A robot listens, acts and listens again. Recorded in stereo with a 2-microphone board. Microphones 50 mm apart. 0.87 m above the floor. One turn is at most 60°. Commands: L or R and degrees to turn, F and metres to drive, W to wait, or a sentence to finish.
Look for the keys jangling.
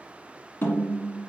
W
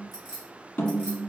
L30
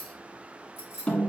L60
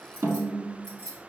L30
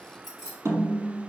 L10
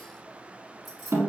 Found it: keys jangling, straight ahead.